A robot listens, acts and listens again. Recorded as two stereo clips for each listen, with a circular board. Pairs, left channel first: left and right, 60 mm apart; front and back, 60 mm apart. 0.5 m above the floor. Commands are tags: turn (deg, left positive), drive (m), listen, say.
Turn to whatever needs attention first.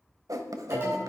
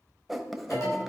<turn deg="-35"/>
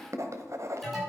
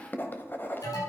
<say>Facing the alarm, over 4 m away.</say>